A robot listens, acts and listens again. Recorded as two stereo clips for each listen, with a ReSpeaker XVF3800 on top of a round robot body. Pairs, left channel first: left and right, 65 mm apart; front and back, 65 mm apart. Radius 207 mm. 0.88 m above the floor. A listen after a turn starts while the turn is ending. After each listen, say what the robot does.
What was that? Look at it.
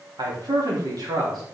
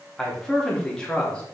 Turn 75° right.
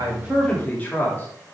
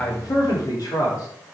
Turn 25° left.
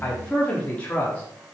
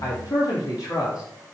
Turn 25° left.
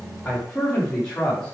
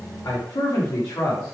Turn 20° left.
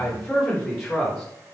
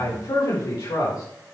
Found it: a man speaking, straight ahead, 2 to 4 m away.